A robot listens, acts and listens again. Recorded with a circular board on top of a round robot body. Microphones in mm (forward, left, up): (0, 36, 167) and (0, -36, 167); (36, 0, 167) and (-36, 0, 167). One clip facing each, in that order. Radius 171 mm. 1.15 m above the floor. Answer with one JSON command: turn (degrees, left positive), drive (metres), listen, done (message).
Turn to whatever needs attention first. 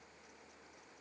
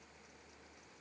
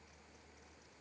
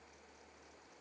{"listen": true}
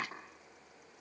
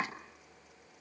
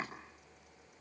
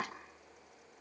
{"listen": true}
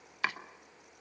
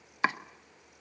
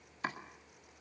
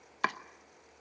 {"done": "I can't make out anything urgent to turn to."}